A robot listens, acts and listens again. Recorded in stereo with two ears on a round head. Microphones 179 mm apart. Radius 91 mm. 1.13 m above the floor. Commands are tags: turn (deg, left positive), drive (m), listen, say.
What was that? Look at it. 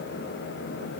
<listen/>
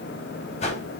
<turn deg="35"/>
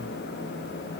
<listen/>
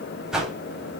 <say>Facing the whoosh, over 4 m away.</say>